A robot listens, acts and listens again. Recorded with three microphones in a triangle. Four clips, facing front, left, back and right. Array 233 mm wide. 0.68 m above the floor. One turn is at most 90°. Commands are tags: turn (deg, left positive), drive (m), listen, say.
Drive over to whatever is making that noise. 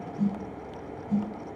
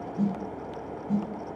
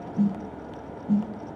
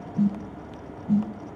<turn deg="-90"/>
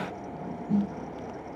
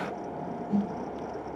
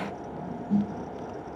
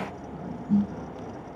<turn deg="-45"/>
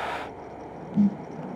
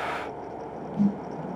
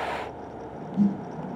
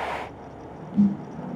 <turn deg="-15"/>
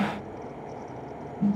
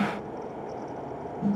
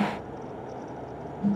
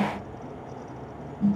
<drive m="1.0"/>
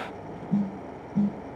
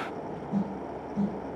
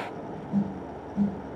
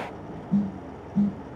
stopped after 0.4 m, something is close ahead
<say>Something is in my way. I am facing the snare drum but have not reached it.</say>